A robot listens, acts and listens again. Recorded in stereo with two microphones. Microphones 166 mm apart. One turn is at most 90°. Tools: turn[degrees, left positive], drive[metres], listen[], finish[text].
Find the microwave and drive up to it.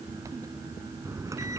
Thought: The microwave: about 20° right or 160° right.
Action: turn[-20]
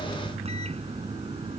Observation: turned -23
Thought: So it is at 140° right.
Action: turn[-90]
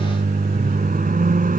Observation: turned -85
Thought: The microwave is now 55° right.
Action: turn[-55]
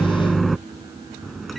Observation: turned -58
Action: drive[1.0]
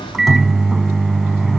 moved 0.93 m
Action: drive[1.0]
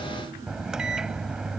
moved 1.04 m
Action: drive[1.0]
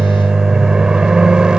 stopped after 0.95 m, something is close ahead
Action: finish[I am next to the microwave.]